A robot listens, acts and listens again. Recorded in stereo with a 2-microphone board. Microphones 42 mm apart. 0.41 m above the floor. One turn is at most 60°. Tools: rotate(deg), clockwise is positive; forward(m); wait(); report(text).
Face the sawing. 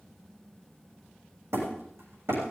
wait()
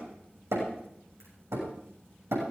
wait()
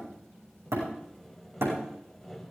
rotate(-30)
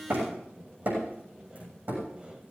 rotate(30)
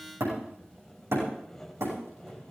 rotate(-10)
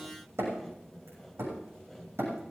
report("Facing the sawing.")